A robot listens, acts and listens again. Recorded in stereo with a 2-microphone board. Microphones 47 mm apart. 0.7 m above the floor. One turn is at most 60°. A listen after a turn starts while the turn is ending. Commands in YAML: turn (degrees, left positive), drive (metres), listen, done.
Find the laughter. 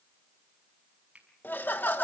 turn: 45
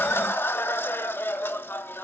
turn: 60
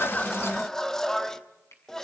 turn: 15
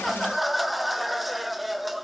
done: "Facing the laughter."